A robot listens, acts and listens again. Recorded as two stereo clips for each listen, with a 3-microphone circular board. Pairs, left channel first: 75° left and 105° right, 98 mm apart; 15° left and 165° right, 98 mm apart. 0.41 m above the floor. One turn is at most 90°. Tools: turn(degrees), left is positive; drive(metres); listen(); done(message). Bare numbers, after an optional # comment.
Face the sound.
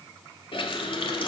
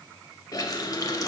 # The running tap: 65° left.
turn(65)
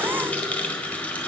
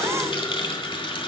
done("Facing the running tap, 1 to 2 m away.")